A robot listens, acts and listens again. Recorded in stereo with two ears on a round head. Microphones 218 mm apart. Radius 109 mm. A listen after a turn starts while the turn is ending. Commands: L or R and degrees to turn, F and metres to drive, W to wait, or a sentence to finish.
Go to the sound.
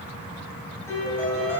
L30
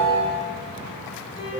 L140
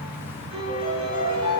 R20
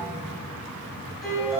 F1.0
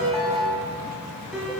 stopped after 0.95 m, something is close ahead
I am next to the piano.